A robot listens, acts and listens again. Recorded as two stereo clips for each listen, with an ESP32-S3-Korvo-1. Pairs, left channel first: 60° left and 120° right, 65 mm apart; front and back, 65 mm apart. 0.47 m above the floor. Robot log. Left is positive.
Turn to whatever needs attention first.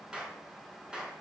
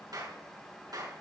cmd idle
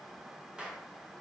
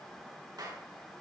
cmd idle
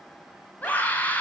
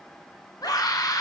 end: Facing the scream.